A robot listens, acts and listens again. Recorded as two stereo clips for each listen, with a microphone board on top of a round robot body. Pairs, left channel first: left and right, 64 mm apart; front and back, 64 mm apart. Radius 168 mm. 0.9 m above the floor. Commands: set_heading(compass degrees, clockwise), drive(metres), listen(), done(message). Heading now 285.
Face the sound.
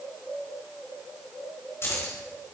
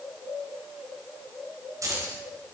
set_heading(140)
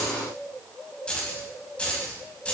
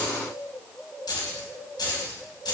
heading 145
set_heading(130)
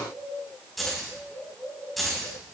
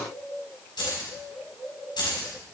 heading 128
done("Facing the keys jangling.")